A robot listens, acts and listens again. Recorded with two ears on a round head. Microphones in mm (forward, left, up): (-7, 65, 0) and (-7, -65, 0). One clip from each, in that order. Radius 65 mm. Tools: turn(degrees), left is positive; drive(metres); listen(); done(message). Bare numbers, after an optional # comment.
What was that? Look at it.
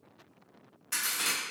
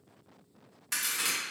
# The crack: about 40° right or 140° right.
turn(-40)
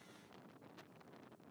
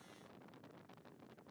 listen()
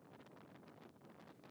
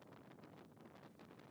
done("I heard a crack, but can't make it out now. It was about straight ahead or 100° right.")